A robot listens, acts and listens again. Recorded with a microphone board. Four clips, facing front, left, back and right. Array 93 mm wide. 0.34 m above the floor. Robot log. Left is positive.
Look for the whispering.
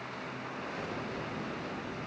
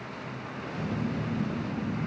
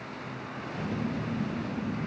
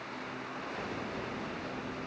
cmd idle
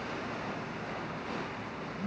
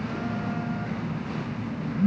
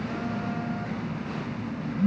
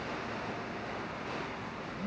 cmd idle
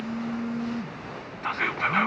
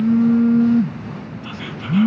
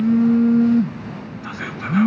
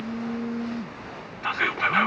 note: The whispering: 50° right.
cmd yaw -50
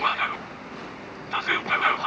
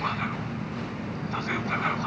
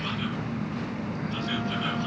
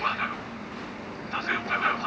end: Found it: whispering, straight ahead, 2 to 4 m away.